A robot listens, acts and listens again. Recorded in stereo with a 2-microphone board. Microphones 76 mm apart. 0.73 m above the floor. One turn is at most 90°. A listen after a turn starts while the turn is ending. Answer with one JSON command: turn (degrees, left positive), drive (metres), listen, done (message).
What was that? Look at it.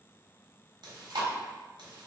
{"turn": -90}
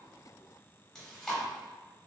{"done": "Facing the chewing."}